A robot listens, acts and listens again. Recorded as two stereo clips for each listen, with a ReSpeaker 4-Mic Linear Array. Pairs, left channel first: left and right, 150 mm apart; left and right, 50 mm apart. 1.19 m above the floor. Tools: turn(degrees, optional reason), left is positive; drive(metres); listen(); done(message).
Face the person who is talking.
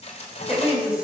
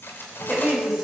turn(degrees=-30)
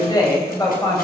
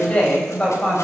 turn(degrees=20, reason="So it is at 20° left.")
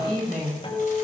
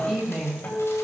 done("Facing the woman speaking, over 4 m away.")